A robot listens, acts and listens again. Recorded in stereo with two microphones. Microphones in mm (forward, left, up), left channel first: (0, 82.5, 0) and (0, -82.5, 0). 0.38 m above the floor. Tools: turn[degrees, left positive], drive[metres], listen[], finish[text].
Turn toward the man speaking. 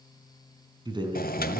Thought: The man speaking: about 30° right or 150° right.
Action: turn[-30]
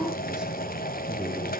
Action: listen[]
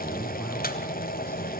Action: listen[]
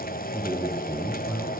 Thought: The man speaking: about 20° right or 160° right.
Action: turn[-20]
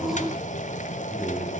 Action: finish[Found it: a man speaking, straight ahead.]